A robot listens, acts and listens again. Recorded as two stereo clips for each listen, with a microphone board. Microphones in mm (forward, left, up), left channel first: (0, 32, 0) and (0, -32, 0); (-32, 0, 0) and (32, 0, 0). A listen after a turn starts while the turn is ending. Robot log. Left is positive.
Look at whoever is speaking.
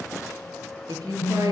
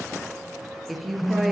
note: The woman speaking: 90° right.
cmd yaw -90
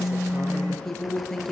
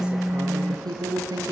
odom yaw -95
end: Found it: a woman speaking, straight ahead.